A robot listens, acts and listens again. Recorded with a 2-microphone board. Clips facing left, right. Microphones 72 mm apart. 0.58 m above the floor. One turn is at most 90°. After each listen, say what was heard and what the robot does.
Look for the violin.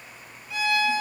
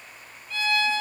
Turn 30° left.
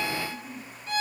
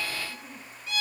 So it is at 135° left. Turn 90° left.
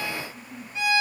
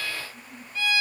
The violin is now 20° left. Turn 20° left.
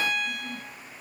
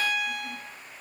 Facing the violin.